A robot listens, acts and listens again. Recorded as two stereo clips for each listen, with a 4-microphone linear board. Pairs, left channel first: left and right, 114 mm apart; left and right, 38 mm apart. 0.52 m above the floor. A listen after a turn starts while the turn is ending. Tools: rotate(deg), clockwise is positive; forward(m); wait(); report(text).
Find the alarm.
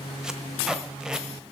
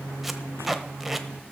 wait()
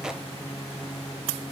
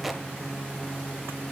wait()
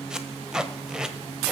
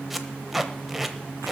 report("I can't make out an alarm, only tape being pulled.")